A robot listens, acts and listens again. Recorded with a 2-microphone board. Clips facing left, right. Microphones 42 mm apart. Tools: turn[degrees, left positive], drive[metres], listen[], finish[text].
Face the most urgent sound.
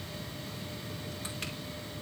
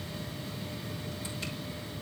Action: listen[]
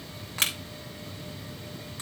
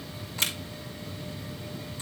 Action: listen[]
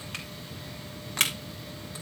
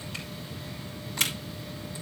Action: finish[I can't make out anything urgent to turn to.]